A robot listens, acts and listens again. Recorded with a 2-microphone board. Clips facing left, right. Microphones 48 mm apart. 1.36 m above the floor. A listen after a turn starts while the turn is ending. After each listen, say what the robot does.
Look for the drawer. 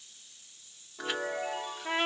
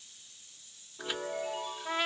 Keep listening.
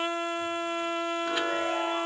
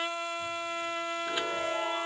Keep listening.
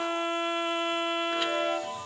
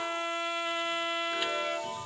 I can't make out a drawer, only a chime and a trumpet.